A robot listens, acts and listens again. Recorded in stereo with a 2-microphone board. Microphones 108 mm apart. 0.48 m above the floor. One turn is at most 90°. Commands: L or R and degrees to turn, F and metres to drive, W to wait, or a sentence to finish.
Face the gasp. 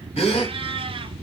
L75
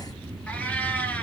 W
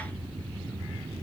I heard a gasp, but can't make it out now. It was about straight ahead or 30° left.